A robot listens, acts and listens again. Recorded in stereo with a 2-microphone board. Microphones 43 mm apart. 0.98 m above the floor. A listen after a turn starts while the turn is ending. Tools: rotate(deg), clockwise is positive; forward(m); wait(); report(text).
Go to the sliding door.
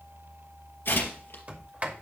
rotate(40)
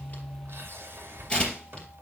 rotate(100)
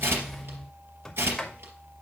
rotate(-15)
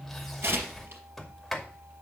forward(1.0)
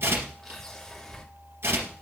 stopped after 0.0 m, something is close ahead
rotate(-10)
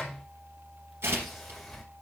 report("Something is in my way. I am facing the sliding door but have not reached it.")